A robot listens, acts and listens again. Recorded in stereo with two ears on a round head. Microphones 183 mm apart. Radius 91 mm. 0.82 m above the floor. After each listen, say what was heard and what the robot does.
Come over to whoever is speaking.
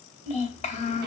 The child speaking: about 35° left or 145° left. Turn 35° left.
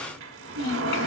So it is at 110° left. Turn 110° left.
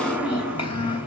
The child speaking is now 25° left. Turn 25° left.
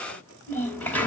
The child speaking is now 10° left. Turn 10° left.
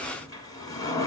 Keep listening.
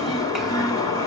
Keep listening.
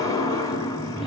I heard a child speaking from this way, but can't make it out now. I did not reach it.